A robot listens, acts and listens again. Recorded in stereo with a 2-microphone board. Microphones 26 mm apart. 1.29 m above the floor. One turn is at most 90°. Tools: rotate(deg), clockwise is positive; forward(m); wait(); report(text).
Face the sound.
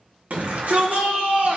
rotate(70)
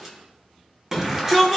rotate(15)
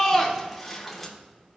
report("Found it: a shout, straight ahead.")